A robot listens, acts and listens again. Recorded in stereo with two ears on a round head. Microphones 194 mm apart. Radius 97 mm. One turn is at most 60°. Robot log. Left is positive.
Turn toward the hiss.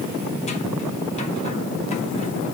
cmd idle
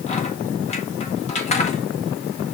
cmd idle
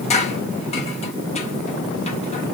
end: I can't make out a hiss to turn to.